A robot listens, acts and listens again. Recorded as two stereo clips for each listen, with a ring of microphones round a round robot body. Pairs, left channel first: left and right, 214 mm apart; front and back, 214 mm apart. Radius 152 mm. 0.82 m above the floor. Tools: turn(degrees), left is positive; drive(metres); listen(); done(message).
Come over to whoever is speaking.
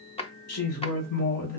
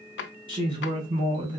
turn(degrees=110)
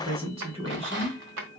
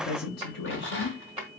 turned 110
turn(degrees=-25)
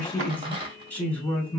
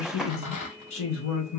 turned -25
drive(metres=1.0)
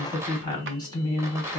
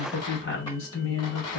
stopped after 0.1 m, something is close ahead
turn(degrees=20)
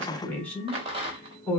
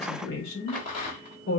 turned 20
done("Something is in my way. I am facing the woman speaking but have not reached it.")